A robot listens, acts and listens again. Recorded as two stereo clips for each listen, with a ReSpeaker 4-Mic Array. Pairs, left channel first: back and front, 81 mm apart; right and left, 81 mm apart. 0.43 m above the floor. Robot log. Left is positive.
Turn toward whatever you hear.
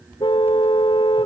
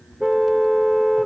note: The car horn: straight behind.
cmd yaw +180
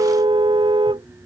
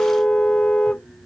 note: The car horn is now 10° right.
cmd yaw -10
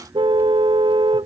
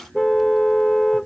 end: Facing the car horn.